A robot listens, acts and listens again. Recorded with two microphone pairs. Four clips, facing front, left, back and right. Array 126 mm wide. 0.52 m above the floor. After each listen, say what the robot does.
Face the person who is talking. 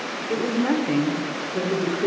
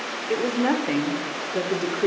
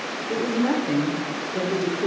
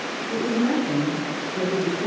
Turn 90° left.
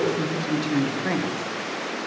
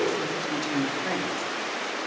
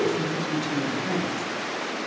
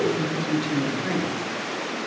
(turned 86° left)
Found it: a woman speaking, straight ahead.